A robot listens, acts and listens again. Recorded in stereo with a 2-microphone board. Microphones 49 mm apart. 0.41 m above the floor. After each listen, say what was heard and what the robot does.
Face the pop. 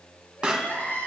The pop: about 20° right or 160° right. Turn 20° right.
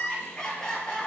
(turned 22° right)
Keep listening.
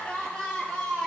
I heard a pop, but can't make it out now. It was about straight ahead or 135° right.